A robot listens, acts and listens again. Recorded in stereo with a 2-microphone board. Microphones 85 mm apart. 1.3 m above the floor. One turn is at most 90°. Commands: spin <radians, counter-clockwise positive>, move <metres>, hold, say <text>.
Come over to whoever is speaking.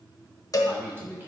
spin -0.44
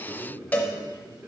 spin -1.57
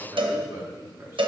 spin -0.52
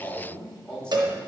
spin 0.17
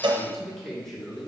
move 1.0
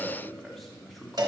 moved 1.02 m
move 1.0
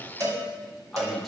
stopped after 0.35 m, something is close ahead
say Arrived at the man speaking, straight ahead.